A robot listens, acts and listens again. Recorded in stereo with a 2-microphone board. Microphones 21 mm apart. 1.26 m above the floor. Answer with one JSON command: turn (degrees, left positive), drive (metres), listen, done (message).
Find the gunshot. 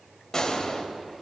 {"turn": 25}
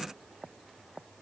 {"listen": true}
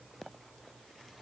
{"done": "I heard a gunshot, but can't make it out now. It was about straight ahead or 130° left."}